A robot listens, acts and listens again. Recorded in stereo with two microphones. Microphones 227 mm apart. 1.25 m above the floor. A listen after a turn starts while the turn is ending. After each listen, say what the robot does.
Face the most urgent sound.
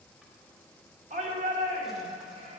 Turn 30° right.
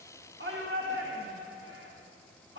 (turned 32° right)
Turn 115° right.
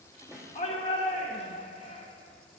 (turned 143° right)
Turn 25° left.
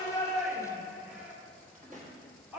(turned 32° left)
Found it: a shout, straight ahead, under 1 m away.